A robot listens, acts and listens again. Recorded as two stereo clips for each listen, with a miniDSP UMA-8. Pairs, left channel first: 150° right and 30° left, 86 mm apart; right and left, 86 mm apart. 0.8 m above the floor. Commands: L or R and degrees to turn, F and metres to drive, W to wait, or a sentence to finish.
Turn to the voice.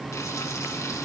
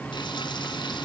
W
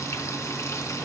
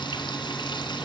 W
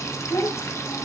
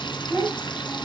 L165
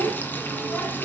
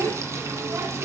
L40
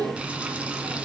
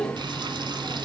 R10
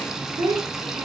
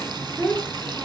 R10
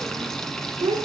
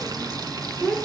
Facing the child speaking.